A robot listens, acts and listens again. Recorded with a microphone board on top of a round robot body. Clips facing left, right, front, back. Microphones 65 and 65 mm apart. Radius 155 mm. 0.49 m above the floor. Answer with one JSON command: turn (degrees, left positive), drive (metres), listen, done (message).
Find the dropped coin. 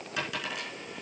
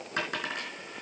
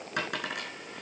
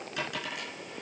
{"turn": -35}
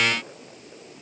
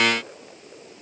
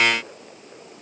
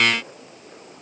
{"done": "Facing where the dropped coin came from. I can't hear it now."}